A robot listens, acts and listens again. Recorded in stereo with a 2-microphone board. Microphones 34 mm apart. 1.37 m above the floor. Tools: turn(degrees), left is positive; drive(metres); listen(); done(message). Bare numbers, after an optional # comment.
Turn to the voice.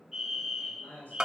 # The man speaking: about 60° left or 120° left.
turn(60)
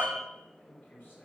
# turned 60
# So it is at 60° left.
turn(60)
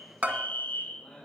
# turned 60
# The man speaking is now 10° left.
turn(10)
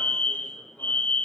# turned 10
listen()
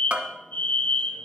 listen()
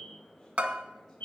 done("I heard a man speaking from this way, but can't make it out now.")